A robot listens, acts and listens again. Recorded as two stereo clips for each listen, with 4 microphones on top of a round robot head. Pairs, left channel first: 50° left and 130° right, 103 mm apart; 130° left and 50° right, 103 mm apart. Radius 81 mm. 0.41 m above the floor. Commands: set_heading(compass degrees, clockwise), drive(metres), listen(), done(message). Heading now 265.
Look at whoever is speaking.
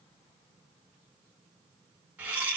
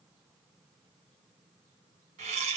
listen()
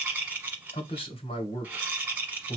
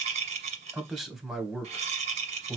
set_heading(225)
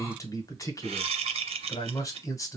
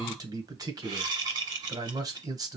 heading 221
done("Facing the man speaking, 1 to 2 m away.")